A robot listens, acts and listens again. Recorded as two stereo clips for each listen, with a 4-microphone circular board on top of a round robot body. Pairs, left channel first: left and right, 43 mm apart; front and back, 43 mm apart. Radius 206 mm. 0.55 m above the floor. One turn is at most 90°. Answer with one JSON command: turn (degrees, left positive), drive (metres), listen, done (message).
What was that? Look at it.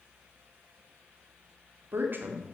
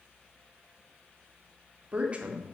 {"turn": -90}
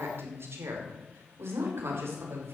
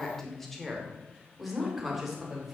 {"turn": -90}
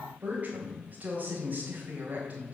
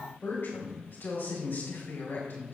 {"turn": -40}
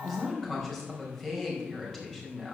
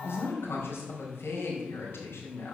{"turn": 10}
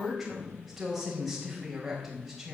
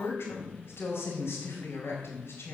{"done": "Found it: a woman speaking, straight ahead, over 4 m away."}